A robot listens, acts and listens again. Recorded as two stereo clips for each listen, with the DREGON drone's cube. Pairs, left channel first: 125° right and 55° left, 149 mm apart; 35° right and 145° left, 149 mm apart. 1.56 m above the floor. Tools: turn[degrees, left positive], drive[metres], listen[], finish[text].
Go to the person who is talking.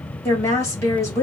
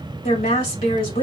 Thought: The woman speaking: 55° right.
Action: turn[-55]
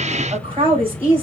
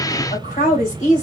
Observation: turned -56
Action: drive[1.0]
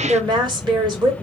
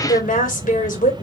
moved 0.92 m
Action: drive[1.0]
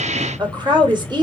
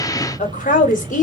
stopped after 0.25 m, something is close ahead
Action: finish[I am next to the woman speaking.]